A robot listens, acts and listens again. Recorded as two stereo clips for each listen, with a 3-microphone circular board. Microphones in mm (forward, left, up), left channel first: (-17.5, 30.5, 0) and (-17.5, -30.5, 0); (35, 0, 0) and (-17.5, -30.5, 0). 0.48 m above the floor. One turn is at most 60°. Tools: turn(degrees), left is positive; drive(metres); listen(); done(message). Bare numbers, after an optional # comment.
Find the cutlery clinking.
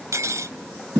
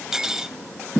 # The cutlery clinking: 70° right.
turn(-60)
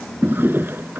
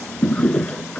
# Nothing new. It was at 10° right.
turn(-10)
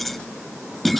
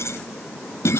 listen()
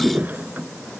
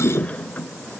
done("Facing where the cutlery clinking came from. I can't hear it now.")